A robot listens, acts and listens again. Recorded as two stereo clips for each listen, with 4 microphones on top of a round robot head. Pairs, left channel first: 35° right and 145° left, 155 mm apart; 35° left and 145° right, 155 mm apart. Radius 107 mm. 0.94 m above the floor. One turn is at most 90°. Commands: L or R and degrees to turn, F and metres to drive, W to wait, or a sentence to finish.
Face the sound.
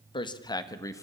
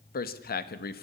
L35
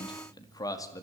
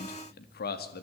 L35
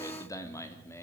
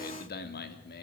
L40
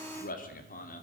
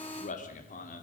Facing the man speaking, 2 to 4 m away.